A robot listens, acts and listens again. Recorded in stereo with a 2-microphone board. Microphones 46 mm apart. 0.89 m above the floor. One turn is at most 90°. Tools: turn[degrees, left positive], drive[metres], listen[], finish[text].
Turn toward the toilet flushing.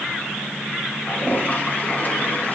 Thought: The toilet flushing: about 40° left or 140° left.
Action: turn[40]
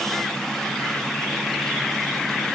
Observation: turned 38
Action: listen[]
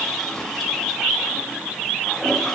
Action: finish[Found it: a toilet flushing, straight ahead.]